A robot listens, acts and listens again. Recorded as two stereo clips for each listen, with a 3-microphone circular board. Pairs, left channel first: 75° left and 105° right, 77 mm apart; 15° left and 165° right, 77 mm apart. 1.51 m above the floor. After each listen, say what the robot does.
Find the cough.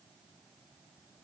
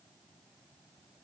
Keep listening.
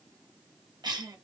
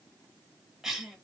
Turn 80° right.
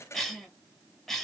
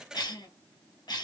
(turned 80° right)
Turn 10° right.
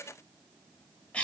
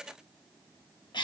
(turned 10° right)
Found it: a cough, straight ahead.